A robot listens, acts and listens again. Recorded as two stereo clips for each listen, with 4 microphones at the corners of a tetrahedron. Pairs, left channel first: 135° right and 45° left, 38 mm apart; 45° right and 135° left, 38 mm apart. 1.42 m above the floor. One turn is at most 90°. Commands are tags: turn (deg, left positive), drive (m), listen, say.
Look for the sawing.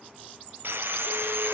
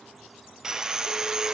<turn deg="60"/>
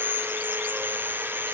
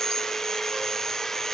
<turn deg="30"/>
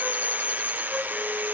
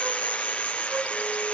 <turn deg="10"/>
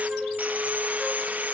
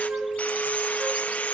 <say>Facing the sawing, under 1 m away.</say>